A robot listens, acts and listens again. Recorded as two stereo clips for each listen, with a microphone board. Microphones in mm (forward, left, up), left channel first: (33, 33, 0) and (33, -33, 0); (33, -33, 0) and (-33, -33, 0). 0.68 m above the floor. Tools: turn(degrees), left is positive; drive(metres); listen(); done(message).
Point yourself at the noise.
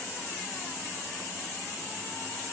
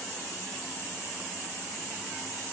listen()
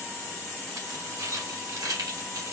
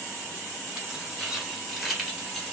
turn(degrees=-95)
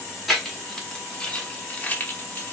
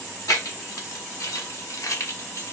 turn(degrees=30)
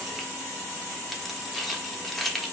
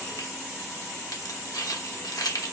done("Facing the keys jangling, 1 to 2 m away.")